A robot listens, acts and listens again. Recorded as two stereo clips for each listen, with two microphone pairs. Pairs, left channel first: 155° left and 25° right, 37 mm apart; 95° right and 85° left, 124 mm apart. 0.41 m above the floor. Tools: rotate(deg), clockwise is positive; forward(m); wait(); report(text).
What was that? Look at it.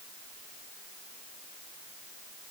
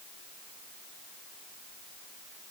wait()
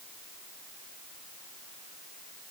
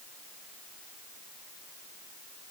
wait()
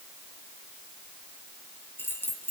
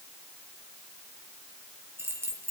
rotate(-155)
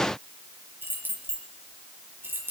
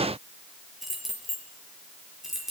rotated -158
report("Found it: keys jangling, straight ahead.")